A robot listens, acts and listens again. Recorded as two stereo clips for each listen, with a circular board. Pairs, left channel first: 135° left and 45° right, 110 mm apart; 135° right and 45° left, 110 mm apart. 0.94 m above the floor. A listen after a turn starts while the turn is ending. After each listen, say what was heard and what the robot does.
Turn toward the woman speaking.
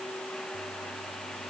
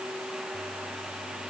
Keep listening.
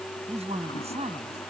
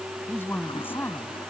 The woman speaking: 65° right. Turn 65° right.
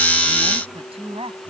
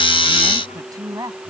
The woman speaking is now 10° right. Turn 10° right.
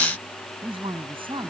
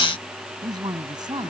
Found it: a woman speaking, straight ahead.